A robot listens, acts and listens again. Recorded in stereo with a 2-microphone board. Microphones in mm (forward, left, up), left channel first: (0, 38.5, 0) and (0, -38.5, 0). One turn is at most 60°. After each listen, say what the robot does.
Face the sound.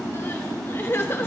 Turn 30° left.
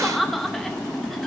Found it: crying, straight ahead, 1 to 2 m away.